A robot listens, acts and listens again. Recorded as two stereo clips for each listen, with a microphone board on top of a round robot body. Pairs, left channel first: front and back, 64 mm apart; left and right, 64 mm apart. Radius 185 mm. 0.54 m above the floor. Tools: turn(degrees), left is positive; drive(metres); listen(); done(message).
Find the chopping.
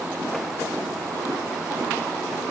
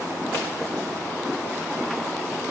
listen()
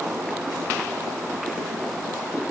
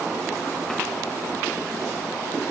listen()
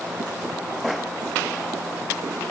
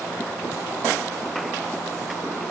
done("I can't make out chopping to turn to.")